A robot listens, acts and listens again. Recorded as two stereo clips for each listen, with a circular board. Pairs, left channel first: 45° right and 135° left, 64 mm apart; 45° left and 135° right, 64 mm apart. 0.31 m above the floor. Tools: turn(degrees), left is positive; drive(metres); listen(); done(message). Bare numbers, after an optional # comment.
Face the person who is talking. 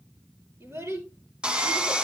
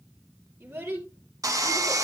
# The child speaking: 175° left.
turn(175)
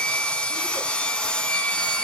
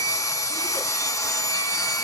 listen()
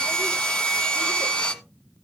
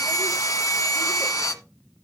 listen()
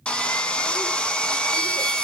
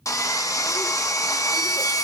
done("Facing where the child speaking came from. I can't hear it now.")